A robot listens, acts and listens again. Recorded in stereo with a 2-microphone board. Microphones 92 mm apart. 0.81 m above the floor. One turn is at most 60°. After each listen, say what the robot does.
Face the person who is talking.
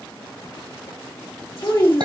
Turn 35° left.
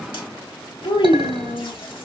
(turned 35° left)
Turn 60° left.
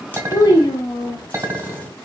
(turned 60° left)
Turn 55° left.
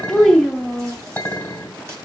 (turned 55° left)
Facing the child speaking, 1 to 2 m away.